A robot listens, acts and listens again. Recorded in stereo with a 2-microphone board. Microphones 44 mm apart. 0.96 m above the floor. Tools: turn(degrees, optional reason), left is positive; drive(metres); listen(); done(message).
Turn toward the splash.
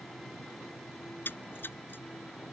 turn(degrees=50, reason="The splash: about 50° left or 130° left.")
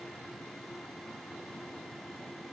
listen()
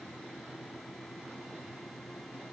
done("I heard a splash, but can't make it out now. It was about straight ahead or 80° left.")